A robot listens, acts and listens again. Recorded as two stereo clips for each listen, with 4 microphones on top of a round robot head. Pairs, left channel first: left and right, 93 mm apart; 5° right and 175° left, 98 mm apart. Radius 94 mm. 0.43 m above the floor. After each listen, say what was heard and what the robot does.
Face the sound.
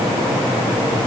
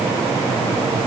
Keep listening.
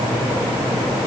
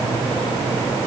Keep listening.
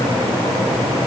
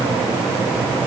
I can't make out anything.